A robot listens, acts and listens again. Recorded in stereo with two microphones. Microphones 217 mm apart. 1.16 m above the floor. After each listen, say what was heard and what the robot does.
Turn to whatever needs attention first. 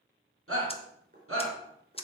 Turn 90° right.
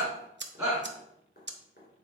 Found it: a shout, straight ahead, 2 to 4 m away.